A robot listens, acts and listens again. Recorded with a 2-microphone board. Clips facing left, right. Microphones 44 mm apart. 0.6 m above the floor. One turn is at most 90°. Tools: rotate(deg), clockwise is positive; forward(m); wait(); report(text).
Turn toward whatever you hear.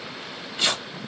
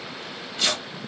rotate(-15)
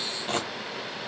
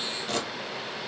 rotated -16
rotate(-90)
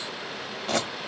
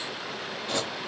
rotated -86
rotate(-60)
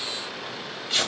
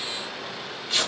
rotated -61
report("Facing the tearing paper, under 1 m away.")